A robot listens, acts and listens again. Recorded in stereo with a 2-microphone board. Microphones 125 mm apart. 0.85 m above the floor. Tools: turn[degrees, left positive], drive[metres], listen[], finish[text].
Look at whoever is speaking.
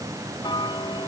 Action: listen[]
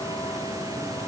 Action: listen[]
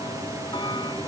Action: finish[I can't make out anyone speaking, only ticking.]